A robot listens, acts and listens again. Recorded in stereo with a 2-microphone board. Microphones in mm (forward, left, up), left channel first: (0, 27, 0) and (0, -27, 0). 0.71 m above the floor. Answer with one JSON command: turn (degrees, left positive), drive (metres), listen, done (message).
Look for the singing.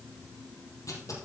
{"listen": true}
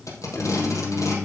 {"turn": 45}
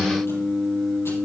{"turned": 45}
{"turn": 10}
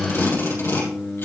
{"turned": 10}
{"turn": 10}
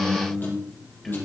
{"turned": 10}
{"done": "Facing the singing."}